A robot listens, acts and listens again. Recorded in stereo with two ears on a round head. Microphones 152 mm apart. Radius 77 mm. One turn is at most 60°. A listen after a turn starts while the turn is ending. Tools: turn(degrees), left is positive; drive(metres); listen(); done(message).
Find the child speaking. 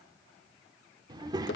turn(degrees=-25)
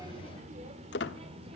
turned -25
turn(degrees=-35)
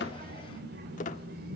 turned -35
turn(degrees=-60)
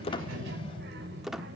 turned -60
turn(degrees=-60)
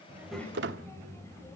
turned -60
turn(degrees=15)
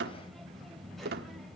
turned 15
done("Found it: a child speaking, straight ahead, 2 to 4 m away.")